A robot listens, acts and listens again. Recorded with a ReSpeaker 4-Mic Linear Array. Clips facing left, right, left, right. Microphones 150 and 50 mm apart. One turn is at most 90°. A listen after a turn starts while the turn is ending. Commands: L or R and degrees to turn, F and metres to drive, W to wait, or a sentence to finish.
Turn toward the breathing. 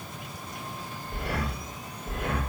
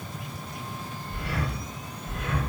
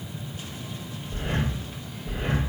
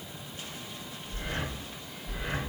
L55
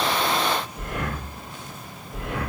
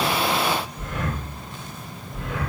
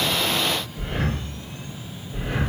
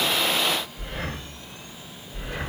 L70
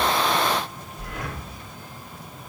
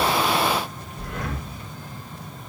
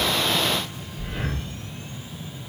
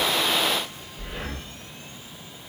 Facing the breathing.